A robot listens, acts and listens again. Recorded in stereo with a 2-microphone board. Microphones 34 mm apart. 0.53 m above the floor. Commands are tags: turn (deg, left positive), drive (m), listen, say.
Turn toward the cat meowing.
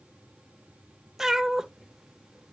<turn deg="-30"/>
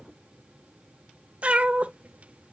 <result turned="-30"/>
<turn deg="-135"/>
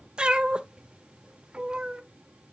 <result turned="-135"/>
<turn deg="-30"/>
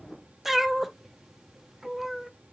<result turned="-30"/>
<say>Found it: a cat meowing, straight ahead, under 1 m away.</say>